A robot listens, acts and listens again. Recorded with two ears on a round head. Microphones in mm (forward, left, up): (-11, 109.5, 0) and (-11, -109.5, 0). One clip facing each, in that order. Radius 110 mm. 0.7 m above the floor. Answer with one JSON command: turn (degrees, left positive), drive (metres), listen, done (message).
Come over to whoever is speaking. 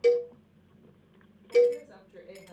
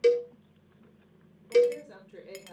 {"turn": -45}
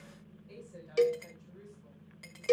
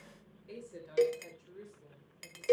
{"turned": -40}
{"turn": -90}
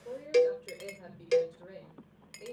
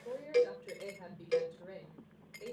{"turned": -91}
{"drive": 1.0}
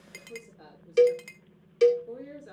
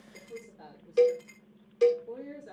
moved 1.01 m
{"drive": 1.0}
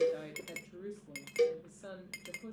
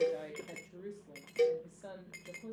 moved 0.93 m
{"turn": 15}
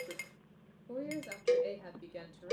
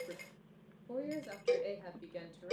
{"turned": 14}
{"drive": 1.0}
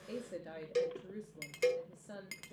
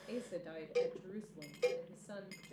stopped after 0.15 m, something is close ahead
{"done": "Arrived at the woman speaking, straight ahead."}